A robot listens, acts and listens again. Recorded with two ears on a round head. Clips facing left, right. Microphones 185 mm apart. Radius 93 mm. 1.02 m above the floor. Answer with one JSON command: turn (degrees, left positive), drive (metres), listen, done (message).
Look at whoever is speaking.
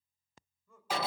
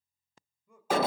{"turn": -30}
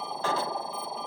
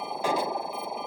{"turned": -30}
{"listen": true}
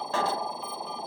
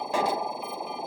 {"listen": true}
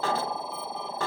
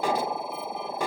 {"done": "I heard a man speaking, but can't make it out now. It was about 15° left or 135° right."}